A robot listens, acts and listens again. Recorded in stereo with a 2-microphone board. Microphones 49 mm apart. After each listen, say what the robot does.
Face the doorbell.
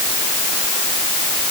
Keep listening.
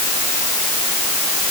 Keep listening.
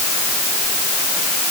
I can't make out a doorbell to turn to.